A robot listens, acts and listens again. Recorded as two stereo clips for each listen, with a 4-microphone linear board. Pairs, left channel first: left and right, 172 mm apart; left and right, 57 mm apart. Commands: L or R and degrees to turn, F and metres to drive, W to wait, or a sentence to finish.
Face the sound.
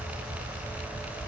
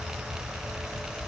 W
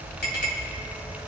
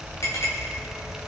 L90
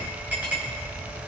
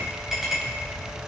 R10
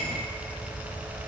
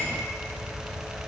W
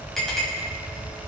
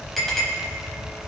Found it: a clink, straight ahead, over 4 m away.